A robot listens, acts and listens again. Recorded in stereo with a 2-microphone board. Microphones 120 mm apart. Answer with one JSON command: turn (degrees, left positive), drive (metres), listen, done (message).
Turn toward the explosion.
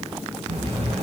{"turn": -60}
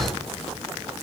{"turn": -55}
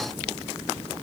{"done": "I heard an explosion from this way, but can't make it out now."}